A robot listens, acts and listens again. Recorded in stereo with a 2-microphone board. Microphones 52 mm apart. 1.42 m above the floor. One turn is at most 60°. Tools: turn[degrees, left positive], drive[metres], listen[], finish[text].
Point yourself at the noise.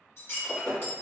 Thought: The breaking glass: about 55° left or 125° left.
Action: turn[55]
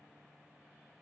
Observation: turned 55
Action: listen[]
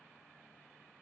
Action: finish[I heard breaking glass, but can't make it out now. It was about straight ahead or 70° left.]